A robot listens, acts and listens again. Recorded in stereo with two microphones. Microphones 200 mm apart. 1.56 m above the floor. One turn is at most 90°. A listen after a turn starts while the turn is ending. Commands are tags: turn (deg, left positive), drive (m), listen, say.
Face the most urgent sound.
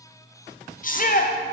<turn deg="45"/>
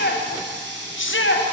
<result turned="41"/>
<turn deg="90"/>
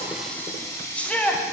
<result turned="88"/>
<say>Facing the shout, under 1 m away.</say>